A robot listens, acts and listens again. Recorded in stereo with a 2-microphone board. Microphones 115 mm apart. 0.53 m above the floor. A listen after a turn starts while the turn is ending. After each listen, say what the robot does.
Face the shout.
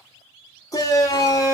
Turn 30° left.
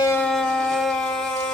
Facing the shout, 1 to 2 m away.